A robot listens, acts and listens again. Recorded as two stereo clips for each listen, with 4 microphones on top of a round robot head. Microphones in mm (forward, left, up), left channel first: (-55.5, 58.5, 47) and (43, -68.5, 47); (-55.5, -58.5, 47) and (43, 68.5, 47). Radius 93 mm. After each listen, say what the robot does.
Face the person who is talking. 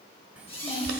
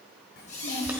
Turn 140° right.
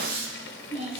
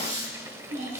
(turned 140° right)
Facing the child speaking, 2 to 4 m away.